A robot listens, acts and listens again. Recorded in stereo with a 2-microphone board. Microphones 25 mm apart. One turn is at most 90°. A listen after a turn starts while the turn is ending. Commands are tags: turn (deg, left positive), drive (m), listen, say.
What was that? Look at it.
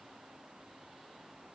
<listen/>
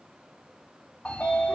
<turn deg="60"/>
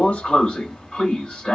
<turn deg="55"/>
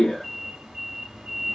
<turn deg="-15"/>
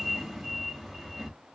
<say>Found it: a sliding door, straight ahead.</say>